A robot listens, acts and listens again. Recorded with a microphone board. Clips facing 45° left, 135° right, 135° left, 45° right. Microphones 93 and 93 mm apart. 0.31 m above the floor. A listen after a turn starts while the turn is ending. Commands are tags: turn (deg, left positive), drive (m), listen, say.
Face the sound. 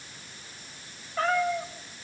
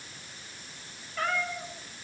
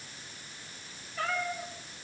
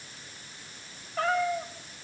<turn deg="-15"/>
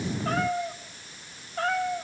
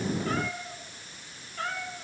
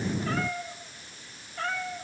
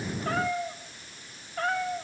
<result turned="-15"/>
<say>Found it: a cat meowing, straight ahead.</say>